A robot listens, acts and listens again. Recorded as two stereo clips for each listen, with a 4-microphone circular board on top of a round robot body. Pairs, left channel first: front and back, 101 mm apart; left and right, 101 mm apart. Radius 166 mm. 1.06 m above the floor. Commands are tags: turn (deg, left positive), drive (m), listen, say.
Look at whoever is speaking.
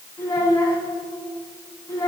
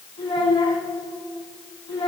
<turn deg="55"/>
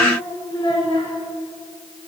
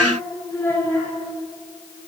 <turn deg="25"/>
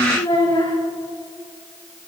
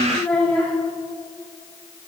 <turn deg="10"/>
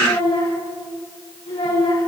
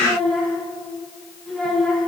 <say>Found it: a child speaking, straight ahead.</say>